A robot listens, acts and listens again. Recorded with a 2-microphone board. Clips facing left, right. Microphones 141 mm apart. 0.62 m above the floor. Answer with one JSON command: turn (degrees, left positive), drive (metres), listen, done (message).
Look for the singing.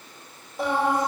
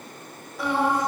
{"turn": 25}
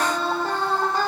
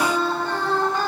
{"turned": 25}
{"turn": 35}
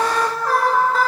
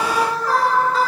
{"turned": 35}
{"turn": 130}
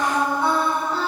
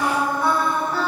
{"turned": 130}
{"turn": 30}
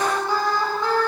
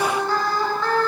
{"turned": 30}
{"turn": 20}
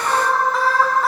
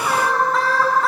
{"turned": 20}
{"done": "Found it: singing, straight ahead."}